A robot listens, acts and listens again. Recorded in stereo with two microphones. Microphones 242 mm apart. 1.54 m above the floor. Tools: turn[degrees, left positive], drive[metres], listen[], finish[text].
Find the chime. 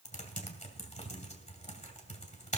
Action: listen[]
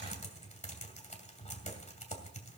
Action: listen[]
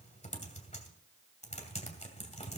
Action: finish[I can't make out a chime to turn to.]